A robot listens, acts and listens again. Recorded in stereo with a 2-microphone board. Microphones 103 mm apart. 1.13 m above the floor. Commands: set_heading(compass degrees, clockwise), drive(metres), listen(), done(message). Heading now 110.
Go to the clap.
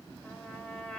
listen()
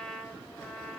listen()
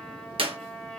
set_heading(170)
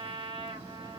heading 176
listen()
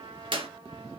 set_heading(231)
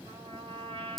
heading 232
drive(1.0)
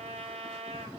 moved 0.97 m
listen()
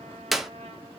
drive(1.0)
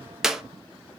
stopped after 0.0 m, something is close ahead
done("I am next to the clap.")